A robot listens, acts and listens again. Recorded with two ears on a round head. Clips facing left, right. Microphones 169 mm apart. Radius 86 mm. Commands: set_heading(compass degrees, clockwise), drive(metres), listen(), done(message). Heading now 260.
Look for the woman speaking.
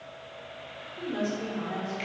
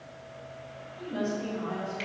set_heading(190)
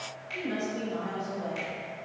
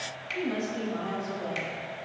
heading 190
set_heading(175)
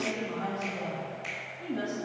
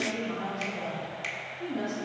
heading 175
set_heading(165)
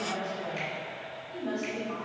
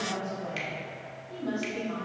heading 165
done("Facing the woman speaking.")